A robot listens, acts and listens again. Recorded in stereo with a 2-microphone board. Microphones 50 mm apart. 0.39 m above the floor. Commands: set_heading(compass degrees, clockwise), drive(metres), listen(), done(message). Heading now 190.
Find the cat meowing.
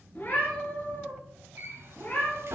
set_heading(155)
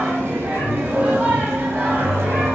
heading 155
listen()
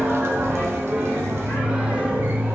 listen()
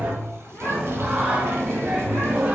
done("I heard a cat meowing, but can't make it out now. It was about straight ahead or 110° left.")